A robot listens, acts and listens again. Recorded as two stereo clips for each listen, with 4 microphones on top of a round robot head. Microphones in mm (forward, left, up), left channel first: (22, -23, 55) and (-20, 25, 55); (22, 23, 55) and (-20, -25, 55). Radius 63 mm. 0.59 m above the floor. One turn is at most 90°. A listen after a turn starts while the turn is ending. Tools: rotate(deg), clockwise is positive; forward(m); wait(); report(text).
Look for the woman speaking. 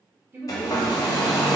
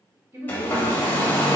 rotate(-90)
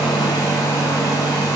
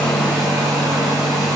rotate(-90)
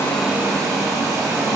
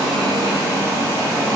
wait()
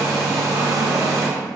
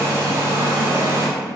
report("I heard a woman speaking from this way, but can't make it out now.")